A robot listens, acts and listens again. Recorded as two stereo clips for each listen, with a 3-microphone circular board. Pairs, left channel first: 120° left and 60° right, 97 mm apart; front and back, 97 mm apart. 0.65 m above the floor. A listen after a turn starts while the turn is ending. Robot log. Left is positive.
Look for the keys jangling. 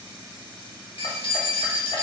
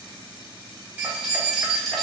note: The keys jangling: 90° left.
cmd yaw +90
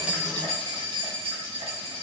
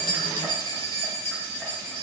note: The keys jangling is now 75° right.
cmd yaw -75
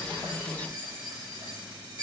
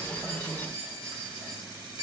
note: The keys jangling is now 10° right.
cmd yaw -10
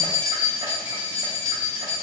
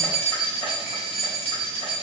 end: Found it: keys jangling, straight ahead, 2 to 4 m away.